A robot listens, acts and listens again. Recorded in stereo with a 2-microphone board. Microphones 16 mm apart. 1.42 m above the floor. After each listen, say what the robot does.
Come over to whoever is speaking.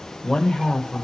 Turn 90° left.
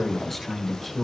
Turn 10° left.
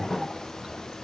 Drive 1.0 m forward.
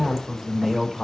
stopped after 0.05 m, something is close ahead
Turn 10° right.
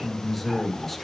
Something is in my way. I am facing the man speaking but have not reached it.